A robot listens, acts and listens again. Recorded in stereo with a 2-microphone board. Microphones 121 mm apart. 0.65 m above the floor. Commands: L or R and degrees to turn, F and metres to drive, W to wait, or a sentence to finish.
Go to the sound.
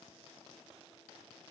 W
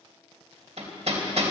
R70
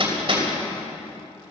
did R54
R50
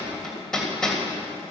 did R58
F1.0
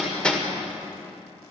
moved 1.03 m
L10
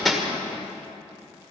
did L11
F1.0
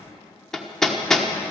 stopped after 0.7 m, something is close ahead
Arrived at the hammering, straight ahead.